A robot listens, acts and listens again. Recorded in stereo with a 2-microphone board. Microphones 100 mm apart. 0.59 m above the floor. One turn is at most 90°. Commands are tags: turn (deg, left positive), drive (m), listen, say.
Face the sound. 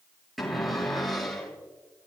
<turn deg="30"/>
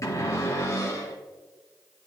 <turn deg="90"/>
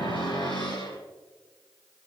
<turn deg="60"/>
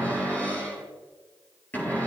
<turn deg="20"/>
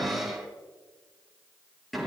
<say>Facing the cupboard door, over 4 m away.</say>